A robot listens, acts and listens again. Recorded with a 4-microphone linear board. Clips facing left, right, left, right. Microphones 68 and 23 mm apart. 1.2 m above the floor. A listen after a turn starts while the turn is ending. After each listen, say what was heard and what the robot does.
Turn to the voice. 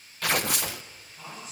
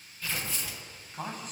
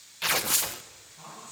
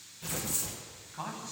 The man speaking: about 50° right or 130° right. Turn 50° right.
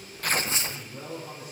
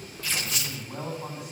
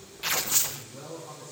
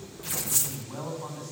So it is at 80° right. Turn 80° right.
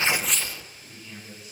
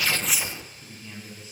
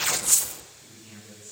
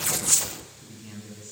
The man speaking is now 25° right. Turn 25° right.
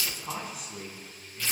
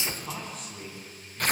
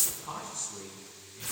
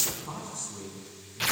Facing the man speaking, over 4 m away.